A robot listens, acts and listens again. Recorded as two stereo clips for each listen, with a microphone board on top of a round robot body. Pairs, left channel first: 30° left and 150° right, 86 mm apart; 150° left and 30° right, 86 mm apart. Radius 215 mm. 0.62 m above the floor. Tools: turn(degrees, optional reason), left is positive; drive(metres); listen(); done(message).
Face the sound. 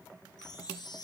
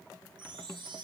turn(degrees=-10, reason="The chime: 10° right.")
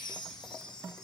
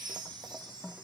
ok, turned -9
done("Found it: a chime, straight ahead.")